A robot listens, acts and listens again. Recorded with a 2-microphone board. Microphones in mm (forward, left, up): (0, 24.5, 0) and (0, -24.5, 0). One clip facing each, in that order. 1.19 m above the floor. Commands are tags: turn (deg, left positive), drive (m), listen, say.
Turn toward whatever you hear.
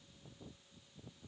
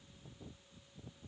<listen/>
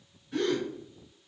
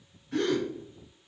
<turn deg="-90"/>
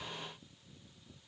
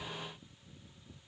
<say>I heard a gasp from this way, but can't make it out now.</say>